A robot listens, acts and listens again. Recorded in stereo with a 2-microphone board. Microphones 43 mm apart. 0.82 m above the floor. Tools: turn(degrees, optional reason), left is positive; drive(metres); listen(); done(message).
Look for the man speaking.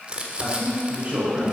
turn(degrees=-35, reason="The man speaking: about 35° right or 145° right.")
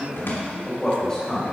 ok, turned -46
turn(degrees=20, reason="So it is at 20° left.")
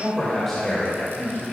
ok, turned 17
turn(degrees=15, reason="The man speaking is now 15° left.")
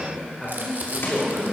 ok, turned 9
turn(degrees=15, reason="The man speaking is now 15° left.")
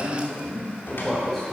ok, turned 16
done("Found it: a man speaking, straight ahead.")